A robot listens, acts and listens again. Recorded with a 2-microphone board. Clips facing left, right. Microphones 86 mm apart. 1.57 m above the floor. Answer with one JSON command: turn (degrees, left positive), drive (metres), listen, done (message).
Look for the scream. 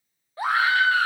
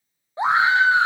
{"turn": -20}
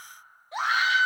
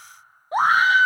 {"turn": -135}
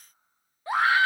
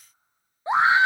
{"turn": -25}
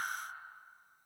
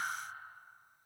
{"listen": true}
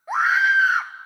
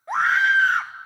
{"done": "Facing the scream, under 1 m away."}